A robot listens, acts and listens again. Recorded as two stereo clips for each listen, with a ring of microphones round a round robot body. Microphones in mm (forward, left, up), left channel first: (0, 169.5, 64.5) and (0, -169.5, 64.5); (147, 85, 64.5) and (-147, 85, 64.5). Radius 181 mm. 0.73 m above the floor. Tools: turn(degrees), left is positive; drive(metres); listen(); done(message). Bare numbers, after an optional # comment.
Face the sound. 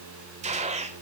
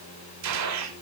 # The gunshot: 160° right.
turn(-160)
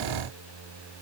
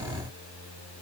done("Facing where the gunshot came from. I can't hear it now.")